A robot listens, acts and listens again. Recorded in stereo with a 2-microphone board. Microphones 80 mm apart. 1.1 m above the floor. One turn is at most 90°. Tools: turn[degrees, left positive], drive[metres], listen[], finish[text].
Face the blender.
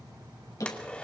Action: turn[30]
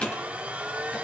Thought: So it is at 15° right.
Action: turn[-15]
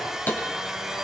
Action: finish[Found it: a blender, straight ahead.]